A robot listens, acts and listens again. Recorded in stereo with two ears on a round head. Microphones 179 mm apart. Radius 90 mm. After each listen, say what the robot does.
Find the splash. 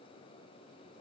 Keep listening.
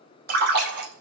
Turn 55° right.
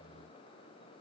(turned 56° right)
Keep listening.
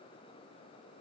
I heard a splash, but can't make it out now. It was about straight ahead or 70° right.